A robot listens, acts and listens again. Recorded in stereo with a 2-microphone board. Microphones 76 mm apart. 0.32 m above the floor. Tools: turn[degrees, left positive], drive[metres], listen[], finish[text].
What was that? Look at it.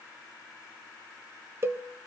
Thought: The cowbell: about 35° right or 145° right.
Action: turn[-35]
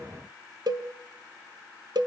Thought: So it is at 110° right.
Action: turn[-110]
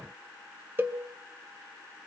Thought: The cowbell is now 30° right.
Action: turn[-30]
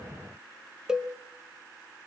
Thought: The cowbell is now 10° right.
Action: turn[-10]
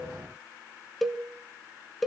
Action: finish[Found it: a cowbell, straight ahead.]